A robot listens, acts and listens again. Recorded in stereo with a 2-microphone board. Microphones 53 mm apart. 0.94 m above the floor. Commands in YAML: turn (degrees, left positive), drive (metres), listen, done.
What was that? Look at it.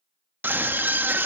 turn: -40
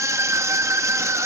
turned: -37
turn: -100
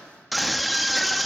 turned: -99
done: "Facing the scream."